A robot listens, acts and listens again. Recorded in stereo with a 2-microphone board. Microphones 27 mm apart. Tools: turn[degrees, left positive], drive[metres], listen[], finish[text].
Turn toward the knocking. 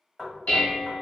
Action: turn[30]
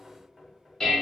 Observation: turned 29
Action: listen[]
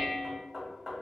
Thought: So it is at 25° right.
Action: turn[-25]
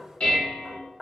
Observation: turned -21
Action: finish[Facing the knocking, 1 to 2 m away.]